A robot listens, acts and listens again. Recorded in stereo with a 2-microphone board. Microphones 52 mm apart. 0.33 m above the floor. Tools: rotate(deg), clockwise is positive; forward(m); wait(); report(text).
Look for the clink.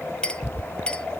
rotate(-20)
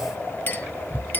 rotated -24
rotate(-130)
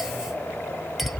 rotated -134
wait()
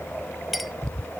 report("Facing the clink, 1 to 2 m away.")